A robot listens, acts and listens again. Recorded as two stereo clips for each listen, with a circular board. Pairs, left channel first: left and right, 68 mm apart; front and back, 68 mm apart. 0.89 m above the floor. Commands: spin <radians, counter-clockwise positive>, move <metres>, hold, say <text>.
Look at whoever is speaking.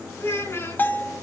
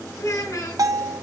spin 0.61
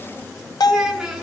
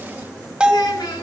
spin -0.17
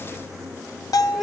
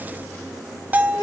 hold
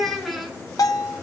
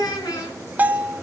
say Found it: a child speaking, straight ahead, over 4 m away.